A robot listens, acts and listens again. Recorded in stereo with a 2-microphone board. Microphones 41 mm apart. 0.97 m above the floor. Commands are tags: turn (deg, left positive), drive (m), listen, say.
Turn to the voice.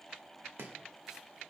<listen/>
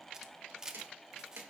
<listen/>
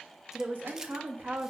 <turn deg="-50"/>
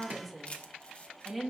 <say>Found it: a woman speaking, straight ahead, 1 to 2 m away.</say>